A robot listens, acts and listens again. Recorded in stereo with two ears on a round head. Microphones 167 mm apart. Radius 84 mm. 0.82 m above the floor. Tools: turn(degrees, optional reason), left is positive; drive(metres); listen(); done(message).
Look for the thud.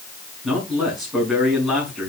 listen()
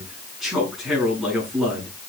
listen()
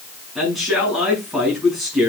done("I can't make out a thud to turn to.")